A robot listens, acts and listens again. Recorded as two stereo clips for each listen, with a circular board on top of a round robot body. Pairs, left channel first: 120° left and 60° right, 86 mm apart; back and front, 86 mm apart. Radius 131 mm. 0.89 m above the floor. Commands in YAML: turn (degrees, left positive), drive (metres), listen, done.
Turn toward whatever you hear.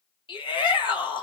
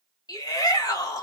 turn: 140
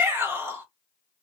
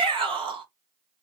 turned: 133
done: "Found it: a shout, straight ahead, 2 to 4 m away."